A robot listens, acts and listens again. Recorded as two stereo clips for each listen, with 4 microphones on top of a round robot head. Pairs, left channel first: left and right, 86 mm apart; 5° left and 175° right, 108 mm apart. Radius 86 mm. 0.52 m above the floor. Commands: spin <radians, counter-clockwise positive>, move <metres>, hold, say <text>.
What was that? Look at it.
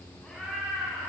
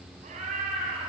spin 3.14
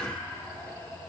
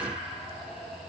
spin 0.52
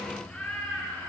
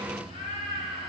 spin 0.17
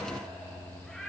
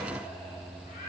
say Found it: a cat meowing, straight ahead, over 4 m away.